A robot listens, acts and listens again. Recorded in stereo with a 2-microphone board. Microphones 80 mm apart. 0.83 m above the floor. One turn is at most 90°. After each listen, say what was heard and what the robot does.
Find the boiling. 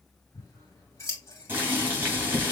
The boiling: about 25° right or 155° right. Turn 25° right.
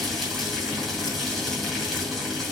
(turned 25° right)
Facing the boiling, 2 to 4 m away.